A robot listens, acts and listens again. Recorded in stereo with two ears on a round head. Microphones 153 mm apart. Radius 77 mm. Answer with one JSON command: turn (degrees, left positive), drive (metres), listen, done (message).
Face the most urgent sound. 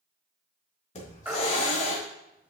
{"turn": -30}
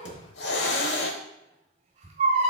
{"turn": -140}
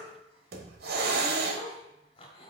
{"listen": true}
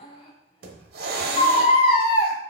{"turn": 35}
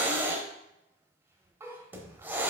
{"listen": true}
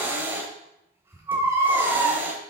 {"turn": -15}
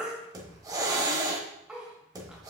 {"done": "Facing the baby crying, 1 to 2 m away."}